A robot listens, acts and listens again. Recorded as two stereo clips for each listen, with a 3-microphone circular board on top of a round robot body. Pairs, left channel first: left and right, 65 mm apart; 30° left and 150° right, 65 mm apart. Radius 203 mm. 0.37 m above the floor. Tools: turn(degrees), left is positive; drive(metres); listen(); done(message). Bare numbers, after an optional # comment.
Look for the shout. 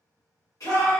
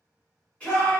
# The shout: 100° left.
turn(100)
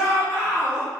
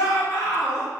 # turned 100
done("Found it: a shout, straight ahead.")